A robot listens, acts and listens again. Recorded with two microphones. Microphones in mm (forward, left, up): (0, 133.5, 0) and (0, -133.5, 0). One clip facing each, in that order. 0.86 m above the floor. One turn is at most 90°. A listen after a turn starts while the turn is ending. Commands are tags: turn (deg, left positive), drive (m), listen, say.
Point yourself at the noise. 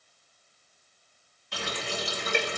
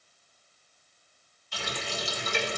<turn deg="65"/>
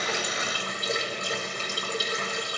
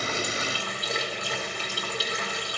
<turn deg="50"/>
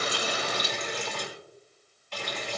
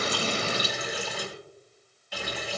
<turn deg="-10"/>
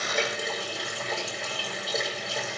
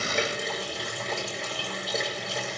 <say>Found it: a running tap, straight ahead, 2 to 4 m away.</say>